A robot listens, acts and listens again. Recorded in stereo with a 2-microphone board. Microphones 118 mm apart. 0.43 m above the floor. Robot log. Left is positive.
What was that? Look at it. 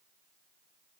cmd idle
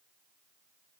cmd idle
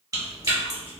note: The chewing: about 30° right or 150° right.
cmd yaw -30
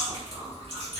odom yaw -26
note: So it is at 125° right.
cmd yaw -125
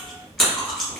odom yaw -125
end: Found it: chewing, straight ahead.